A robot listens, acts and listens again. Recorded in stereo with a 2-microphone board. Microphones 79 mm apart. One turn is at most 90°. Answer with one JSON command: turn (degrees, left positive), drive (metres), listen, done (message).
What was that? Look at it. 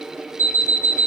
{"turn": 40}
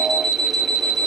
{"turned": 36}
{"done": "Found it: an alarm clock, straight ahead."}